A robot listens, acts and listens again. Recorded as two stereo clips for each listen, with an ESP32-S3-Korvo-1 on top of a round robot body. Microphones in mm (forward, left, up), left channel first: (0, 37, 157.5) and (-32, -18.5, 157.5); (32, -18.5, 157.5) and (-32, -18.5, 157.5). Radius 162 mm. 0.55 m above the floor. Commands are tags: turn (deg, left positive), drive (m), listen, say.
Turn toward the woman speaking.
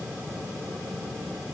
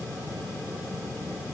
<listen/>
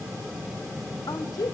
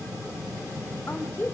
<turn deg="55"/>
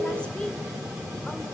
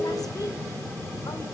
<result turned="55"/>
<turn deg="-15"/>
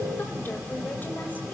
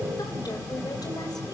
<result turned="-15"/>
<listen/>
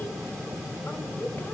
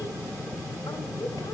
<say>Found it: a woman speaking, straight ahead, 2 to 4 m away.</say>